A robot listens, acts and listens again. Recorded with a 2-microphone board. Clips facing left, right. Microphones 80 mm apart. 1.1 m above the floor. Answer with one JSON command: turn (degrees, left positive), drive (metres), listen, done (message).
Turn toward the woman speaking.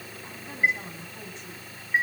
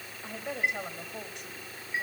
{"turn": -65}
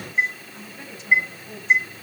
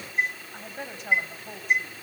{"turn": -55}
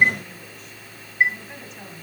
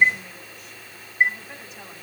{"done": "Found it: a woman speaking, straight ahead."}